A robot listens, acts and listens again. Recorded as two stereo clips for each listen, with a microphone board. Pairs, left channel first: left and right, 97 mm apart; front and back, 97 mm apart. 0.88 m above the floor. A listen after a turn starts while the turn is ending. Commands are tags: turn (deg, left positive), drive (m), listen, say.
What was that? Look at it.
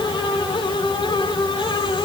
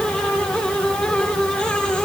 <listen/>
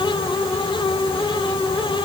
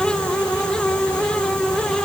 <listen/>
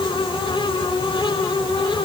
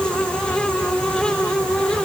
<say>I can't make out anything to turn to.</say>